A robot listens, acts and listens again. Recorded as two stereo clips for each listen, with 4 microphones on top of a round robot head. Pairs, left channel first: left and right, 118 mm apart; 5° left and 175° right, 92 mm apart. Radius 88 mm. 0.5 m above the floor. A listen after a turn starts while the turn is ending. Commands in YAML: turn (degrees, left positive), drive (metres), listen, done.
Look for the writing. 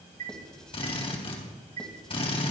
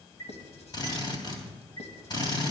done: "Found it: writing, straight ahead."